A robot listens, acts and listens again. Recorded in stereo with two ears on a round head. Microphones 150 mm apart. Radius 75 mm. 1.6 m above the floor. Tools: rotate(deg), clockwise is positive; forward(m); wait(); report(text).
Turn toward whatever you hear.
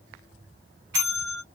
rotate(75)
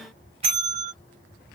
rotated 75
rotate(35)
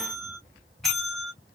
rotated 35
report("Facing the bell, 1 to 2 m away.")